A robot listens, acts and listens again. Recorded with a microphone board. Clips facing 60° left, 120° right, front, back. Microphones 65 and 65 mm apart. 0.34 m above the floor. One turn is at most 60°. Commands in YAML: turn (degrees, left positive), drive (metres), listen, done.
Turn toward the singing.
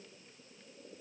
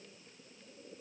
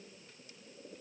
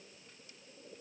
listen: true
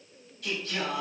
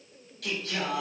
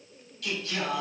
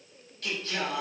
turn: -60
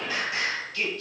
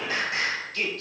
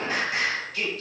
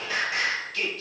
turn: -60
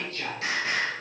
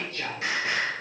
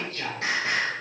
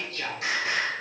turn: -55
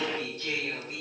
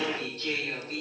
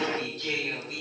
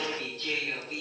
turn: -10
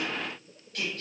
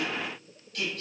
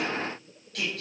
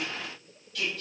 done: "Found it: singing, straight ahead."